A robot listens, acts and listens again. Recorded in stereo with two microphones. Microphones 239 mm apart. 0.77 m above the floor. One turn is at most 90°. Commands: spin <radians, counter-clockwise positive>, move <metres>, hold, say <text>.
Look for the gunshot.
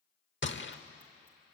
spin 0.87
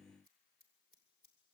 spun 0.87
hold
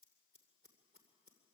say I heard a gunshot, but can't make it out now. It was about straight ahead or 80° left.